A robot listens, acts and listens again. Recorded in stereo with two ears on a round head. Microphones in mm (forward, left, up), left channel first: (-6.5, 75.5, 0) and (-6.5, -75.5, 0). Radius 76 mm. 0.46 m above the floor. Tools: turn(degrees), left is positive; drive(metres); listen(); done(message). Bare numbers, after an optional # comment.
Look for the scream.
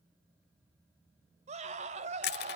# The scream: about 40° right or 140° right.
turn(-40)
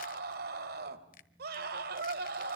# So it is at 90° right.
turn(-90)
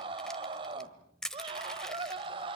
# The scream is now 35° right.
turn(-35)
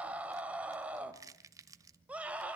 # The scream is now 10° right.
turn(-10)
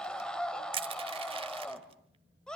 done("Found it: a scream, straight ahead.")